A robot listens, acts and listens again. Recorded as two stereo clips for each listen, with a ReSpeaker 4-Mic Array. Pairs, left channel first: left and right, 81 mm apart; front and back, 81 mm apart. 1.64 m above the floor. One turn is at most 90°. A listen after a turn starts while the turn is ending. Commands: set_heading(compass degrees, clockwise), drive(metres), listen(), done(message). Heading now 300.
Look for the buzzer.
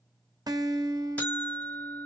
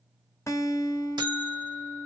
set_heading(210)
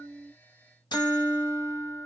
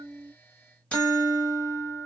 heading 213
set_heading(138)
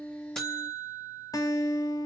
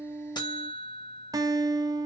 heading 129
set_heading(139)
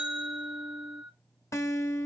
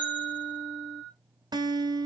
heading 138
done("Facing the buzzer.")